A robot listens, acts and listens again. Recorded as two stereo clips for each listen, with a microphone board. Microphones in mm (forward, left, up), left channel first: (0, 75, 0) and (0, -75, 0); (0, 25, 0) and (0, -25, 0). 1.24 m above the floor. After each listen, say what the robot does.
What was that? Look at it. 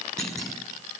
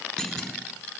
Turn 30° left.
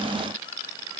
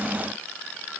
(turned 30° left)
Keep listening.
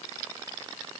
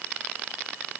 I heard a clunk, but can't make it out now. It was about 25° right or 145° left.